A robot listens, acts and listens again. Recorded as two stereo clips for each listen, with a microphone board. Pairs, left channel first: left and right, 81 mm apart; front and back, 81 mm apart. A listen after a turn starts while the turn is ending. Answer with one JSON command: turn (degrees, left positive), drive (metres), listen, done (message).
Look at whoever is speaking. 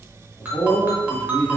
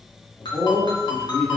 {"turn": 65}
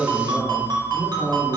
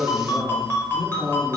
{"turn": 25}
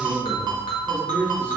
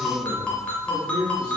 {"turn": 15}
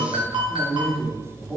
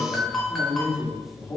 {"done": "Found it: a man speaking, straight ahead."}